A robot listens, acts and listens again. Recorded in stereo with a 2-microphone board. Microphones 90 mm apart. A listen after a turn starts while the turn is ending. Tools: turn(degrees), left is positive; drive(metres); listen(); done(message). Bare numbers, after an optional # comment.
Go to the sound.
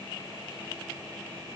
listen()
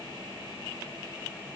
listen()
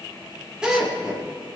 turn(-30)
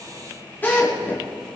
# So it is at 20° left.
turn(20)
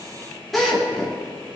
drive(1.0)
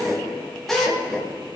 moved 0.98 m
drive(1.0)
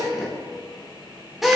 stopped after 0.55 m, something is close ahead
done("Something is in my way. I am facing the drill but have not reached it.")